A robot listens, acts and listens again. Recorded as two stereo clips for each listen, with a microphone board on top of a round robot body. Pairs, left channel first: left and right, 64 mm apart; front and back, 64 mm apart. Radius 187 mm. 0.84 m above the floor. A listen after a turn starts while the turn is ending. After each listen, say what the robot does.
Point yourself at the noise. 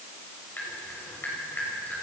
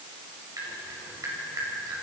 Turn 150° left.
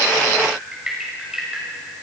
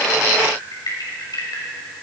Turn 10° right.
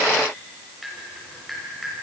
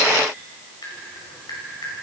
Facing the dripping.